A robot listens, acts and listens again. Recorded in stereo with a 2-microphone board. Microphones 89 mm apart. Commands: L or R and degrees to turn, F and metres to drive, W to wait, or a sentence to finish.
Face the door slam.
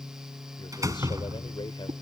R40
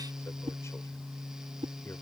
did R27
W
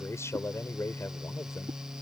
I heard a door slam, but can't make it out now. It was about 10° right or 115° right.